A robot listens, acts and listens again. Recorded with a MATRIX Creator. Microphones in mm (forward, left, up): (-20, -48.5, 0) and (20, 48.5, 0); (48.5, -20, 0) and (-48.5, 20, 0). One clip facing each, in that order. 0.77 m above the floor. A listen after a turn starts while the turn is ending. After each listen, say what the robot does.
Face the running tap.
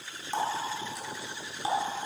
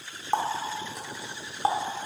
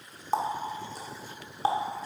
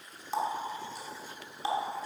Turn 25° left.
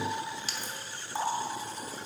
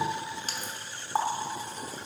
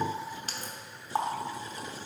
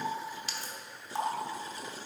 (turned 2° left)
Turn 20° left.
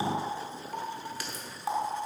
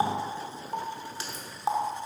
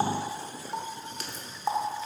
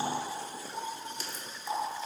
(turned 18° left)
Found it: a running tap, straight ahead, 1 to 2 m away.